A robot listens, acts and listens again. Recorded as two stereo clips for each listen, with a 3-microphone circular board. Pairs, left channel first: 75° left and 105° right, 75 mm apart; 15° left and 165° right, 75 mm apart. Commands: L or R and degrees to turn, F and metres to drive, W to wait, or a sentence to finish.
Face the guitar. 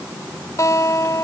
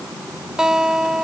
L115
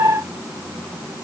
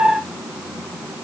W
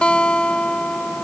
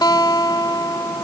Found it: a guitar, straight ahead.